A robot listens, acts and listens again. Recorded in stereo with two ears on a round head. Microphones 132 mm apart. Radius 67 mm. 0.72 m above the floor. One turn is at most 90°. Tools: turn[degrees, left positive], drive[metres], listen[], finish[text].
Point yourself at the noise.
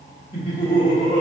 Thought: The laughter: about 25° left or 155° left.
Action: turn[25]
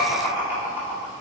Thought: So it is at 10° right.
Action: turn[-10]
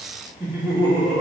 Thought: The laughter is now 15° right.
Action: turn[-15]
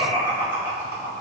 Thought: The laughter is now 15° right.
Action: turn[-15]
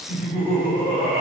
Thought: The laughter is now 15° right.
Action: turn[-15]
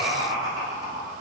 Action: finish[Found it: laughter, straight ahead.]